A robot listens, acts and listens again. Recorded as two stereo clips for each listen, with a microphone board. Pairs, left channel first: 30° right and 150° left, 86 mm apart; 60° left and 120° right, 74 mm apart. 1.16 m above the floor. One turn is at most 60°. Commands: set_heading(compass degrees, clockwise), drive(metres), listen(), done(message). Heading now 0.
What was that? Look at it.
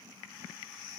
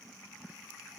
listen()
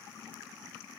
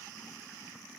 listen()
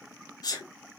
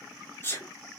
done("Facing the sneeze, 1 to 2 m away.")